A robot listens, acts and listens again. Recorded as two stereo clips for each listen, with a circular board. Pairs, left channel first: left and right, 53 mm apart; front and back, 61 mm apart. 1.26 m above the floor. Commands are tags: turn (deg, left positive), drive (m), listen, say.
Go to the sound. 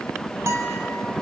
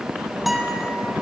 <turn deg="-95"/>
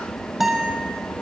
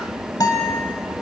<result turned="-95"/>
<drive m="1.0"/>
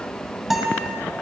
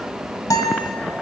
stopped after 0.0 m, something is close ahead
<say>Something is in my way. I am facing the guitar but have not reached it.</say>